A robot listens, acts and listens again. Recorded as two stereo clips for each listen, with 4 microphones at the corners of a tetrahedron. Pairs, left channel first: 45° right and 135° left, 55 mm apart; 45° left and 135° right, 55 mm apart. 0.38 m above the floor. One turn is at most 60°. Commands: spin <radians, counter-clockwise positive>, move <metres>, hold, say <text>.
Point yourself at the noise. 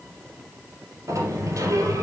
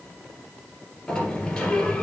spin 1.05
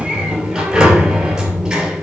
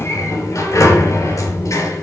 spin 1.05
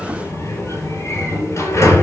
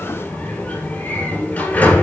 spin -0.26
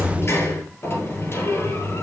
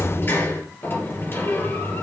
say Found it: a sliding door, straight ahead.